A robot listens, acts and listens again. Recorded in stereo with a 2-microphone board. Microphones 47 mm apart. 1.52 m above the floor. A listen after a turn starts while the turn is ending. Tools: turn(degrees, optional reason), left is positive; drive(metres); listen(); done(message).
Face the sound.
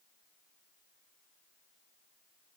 listen()
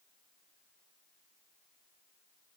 listen()
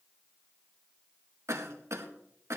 turn(degrees=-90)
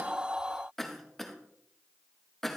done("Found it: a cough, straight ahead.")